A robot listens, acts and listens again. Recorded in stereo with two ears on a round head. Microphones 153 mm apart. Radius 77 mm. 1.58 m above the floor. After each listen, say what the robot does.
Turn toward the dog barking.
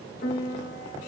Keep listening.
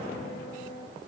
Keep listening.
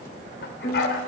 Turn 65° left.
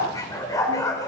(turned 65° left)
Turn 20° left.
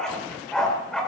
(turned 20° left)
Facing the dog barking, 2 to 4 m away.